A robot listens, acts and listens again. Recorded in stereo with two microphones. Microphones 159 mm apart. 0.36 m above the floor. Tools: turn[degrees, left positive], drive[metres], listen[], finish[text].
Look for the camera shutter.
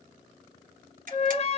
Thought: The camera shutter: about 55° right or 125° right.
Action: turn[-55]
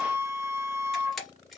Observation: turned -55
Action: finish[Facing the camera shutter, 1 to 2 m away.]